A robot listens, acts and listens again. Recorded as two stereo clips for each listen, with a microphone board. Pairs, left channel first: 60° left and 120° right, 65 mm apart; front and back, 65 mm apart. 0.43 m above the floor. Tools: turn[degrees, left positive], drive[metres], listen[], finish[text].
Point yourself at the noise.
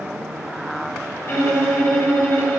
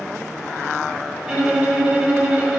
Thought: The violin: 105° left.
Action: turn[105]
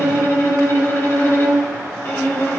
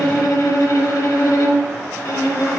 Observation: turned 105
Thought: The violin is now 10° left.
Action: turn[10]
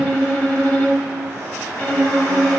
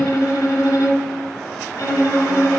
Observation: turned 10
Action: finish[Facing the violin.]